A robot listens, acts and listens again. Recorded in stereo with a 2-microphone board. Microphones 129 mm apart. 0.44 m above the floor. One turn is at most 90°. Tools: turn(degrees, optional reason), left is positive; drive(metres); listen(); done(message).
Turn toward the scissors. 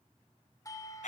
listen()
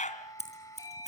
turn(degrees=60, reason="The scissors: about 60° left or 120° left.")
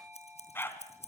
turn(degrees=60, reason="So it is at 60° left.")
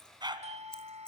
listen()
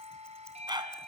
listen()
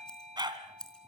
done("Facing the scissors, over 4 m away.")